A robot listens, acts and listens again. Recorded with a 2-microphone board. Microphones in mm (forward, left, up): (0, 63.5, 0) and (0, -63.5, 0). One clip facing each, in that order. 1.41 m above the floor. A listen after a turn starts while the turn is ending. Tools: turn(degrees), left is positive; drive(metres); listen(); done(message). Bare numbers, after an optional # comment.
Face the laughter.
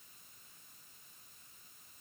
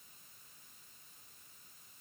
listen()
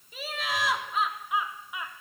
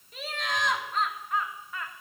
turn(30)
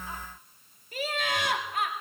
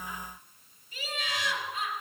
# So it is at 120° left.
turn(120)
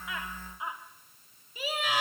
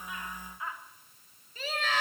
# The laughter is now 10° left.
turn(10)
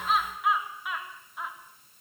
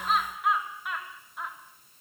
done("Found it: laughter, straight ahead, 2 to 4 m away.")